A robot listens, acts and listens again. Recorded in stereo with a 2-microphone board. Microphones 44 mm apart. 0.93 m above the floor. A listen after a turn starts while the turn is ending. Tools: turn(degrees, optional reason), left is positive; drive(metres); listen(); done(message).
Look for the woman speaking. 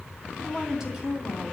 turn(degrees=-30)
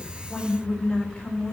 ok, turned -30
turn(degrees=15, reason="So it is at 15° left.")
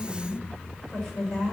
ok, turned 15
done("Found it: a woman speaking, straight ahead, over 4 m away.")